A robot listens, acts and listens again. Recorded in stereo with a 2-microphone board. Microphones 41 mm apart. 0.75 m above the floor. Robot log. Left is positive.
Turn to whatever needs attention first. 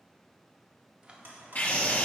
note: The scream: about 45° left or 135° left.
cmd yaw +45
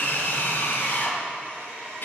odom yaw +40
note: So it is at 80° left.
cmd yaw +80
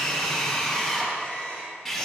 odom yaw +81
end: Facing the scream.